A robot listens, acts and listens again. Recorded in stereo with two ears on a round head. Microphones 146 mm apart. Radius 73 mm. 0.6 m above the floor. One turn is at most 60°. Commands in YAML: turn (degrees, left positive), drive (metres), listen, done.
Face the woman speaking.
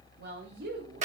turn: -60
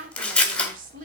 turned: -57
turn: -50
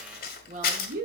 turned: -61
turn: -55
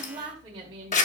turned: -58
turn: -30
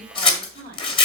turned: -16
turn: -20
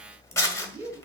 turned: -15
done: "Facing the woman speaking, 2 to 4 m away."